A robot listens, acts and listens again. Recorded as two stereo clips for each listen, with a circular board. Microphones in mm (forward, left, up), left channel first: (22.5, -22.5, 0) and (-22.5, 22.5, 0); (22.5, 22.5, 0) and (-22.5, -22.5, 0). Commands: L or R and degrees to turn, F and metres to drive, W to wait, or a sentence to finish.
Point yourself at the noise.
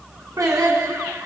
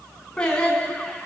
L120
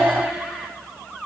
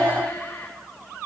L55
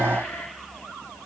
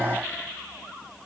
W
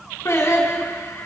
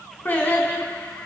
R15
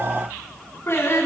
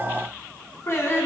Found it: singing, straight ahead, 2 to 4 m away.